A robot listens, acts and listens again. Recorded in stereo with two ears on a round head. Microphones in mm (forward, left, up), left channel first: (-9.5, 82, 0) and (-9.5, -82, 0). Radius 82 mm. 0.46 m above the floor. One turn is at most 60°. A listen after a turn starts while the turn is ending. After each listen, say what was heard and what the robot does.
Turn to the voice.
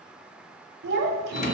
The child speaking: about 60° right or 120° right. Turn 60° right.
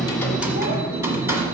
Keep listening.
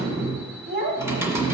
So it is at 55° right. Turn 55° right.
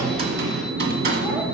Keep listening.
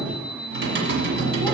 Keep listening.
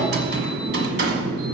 I heard a child speaking from this way, but can't make it out now.